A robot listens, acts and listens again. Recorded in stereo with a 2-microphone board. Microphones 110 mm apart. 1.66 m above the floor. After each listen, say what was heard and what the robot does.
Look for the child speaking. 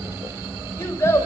The child speaking: about 25° left or 155° left. Turn 25° left.
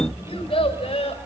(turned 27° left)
So it is at 125° left. Turn 125° left.
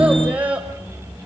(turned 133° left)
The child speaking is now 10° right. Turn 10° right.
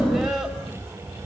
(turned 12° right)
Keep listening.
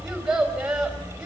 Facing the child speaking.